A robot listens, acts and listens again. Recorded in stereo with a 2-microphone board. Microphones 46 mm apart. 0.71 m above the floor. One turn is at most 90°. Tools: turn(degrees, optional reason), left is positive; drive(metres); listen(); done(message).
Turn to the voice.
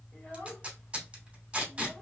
turn(degrees=30, reason="The child speaking: about 30° left or 150° left.")
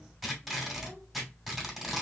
listen()
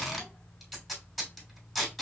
listen()
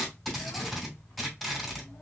done("I heard a child speaking, but can't make it out now. It was about straight ahead or 120° left.")